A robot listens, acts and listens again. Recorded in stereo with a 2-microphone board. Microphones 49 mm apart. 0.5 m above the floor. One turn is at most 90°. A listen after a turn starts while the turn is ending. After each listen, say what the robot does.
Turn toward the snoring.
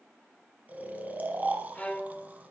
Turn 35° right.
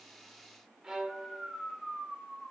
Facing the snoring.